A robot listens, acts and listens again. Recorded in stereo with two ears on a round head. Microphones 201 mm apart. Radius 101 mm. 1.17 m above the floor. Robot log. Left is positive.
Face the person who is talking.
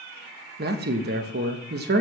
note: The man speaking: about 45° right or 135° right.
cmd yaw -45
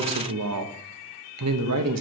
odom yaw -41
note: So it is at 90° right.
cmd yaw -90
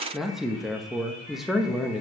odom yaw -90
end: Facing the man speaking.